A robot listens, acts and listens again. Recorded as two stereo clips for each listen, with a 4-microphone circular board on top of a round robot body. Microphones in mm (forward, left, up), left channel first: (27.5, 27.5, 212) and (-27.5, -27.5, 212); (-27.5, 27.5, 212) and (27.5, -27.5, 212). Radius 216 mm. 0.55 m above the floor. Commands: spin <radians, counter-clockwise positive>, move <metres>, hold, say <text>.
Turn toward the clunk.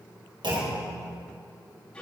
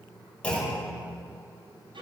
spin -2.62
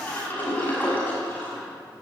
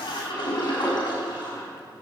say I heard a clunk from this way, but can't make it out now.